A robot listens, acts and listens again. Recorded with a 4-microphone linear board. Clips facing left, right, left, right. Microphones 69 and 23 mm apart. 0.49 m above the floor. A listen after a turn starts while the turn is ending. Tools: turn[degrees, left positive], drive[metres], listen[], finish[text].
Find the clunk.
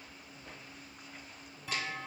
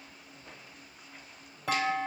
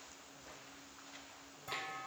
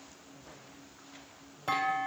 Action: turn[-90]
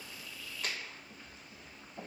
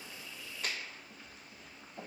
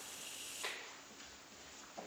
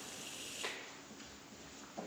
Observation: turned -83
Action: finish[I heard a clunk from this way, but can't make it out now.]